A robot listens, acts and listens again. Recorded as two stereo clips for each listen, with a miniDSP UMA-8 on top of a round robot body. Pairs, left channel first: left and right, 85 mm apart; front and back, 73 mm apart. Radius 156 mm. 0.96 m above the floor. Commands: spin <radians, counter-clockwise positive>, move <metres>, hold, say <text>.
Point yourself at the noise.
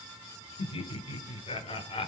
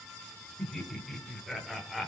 spin 1.66
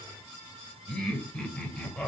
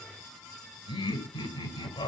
spin 0.26
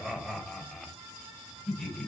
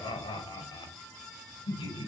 say Found it: laughter, straight ahead.